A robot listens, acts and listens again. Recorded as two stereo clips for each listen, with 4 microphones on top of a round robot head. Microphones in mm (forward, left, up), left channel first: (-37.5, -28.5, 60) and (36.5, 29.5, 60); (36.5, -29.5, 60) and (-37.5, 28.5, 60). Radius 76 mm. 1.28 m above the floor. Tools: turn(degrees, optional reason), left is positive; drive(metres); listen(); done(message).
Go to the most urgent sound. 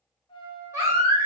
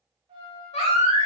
turn(degrees=-25, reason="The baby crying: 25° right.")
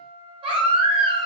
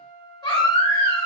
drive(metres=1.0)
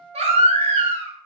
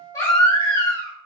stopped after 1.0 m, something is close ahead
turn(degrees=15, reason="The baby crying is now 15° left.")
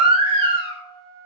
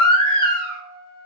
done("Arrived at the baby crying, straight ahead.")